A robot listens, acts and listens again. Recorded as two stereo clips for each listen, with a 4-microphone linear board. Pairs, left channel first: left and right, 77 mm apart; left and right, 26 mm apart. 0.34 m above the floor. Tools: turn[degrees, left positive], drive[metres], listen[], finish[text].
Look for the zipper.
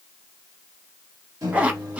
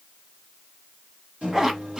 Thought: The zipper: about 20° right or 160° right.
Action: turn[-20]
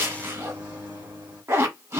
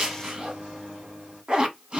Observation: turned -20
Thought: So it is at 145° right.
Action: turn[-145]
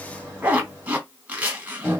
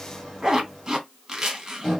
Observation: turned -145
Thought: The zipper is now 20° right.
Action: turn[-20]
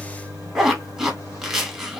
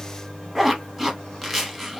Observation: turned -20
Action: finish[Found it: a zipper, straight ahead.]